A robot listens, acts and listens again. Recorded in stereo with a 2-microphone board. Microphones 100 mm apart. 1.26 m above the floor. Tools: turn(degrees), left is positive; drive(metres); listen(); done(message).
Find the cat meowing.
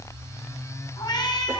turn(degrees=45)
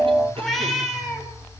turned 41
done("Facing the cat meowing, 2 to 4 m away.")